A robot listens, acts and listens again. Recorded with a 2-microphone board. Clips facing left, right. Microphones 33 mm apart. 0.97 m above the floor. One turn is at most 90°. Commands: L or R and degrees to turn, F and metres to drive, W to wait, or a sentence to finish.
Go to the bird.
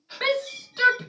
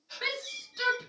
R15
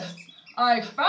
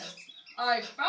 F1.0
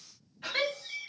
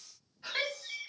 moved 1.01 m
F1.0
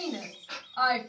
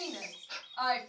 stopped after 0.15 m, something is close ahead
I am next to the bird.